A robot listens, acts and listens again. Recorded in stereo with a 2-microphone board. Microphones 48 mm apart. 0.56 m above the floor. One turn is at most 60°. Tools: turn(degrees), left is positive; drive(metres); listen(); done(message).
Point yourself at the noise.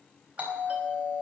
turn(degrees=-30)
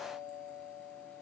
done("Found it: a doorbell, straight ahead, over 4 m away.")